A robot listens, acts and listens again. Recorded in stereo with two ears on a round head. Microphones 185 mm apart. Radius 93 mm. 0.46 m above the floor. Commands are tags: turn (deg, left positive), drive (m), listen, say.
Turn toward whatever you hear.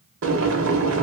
<turn deg="-65"/>
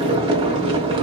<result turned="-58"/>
<turn deg="-25"/>
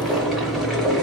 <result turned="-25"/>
<say>Found it: boiling, straight ahead.</say>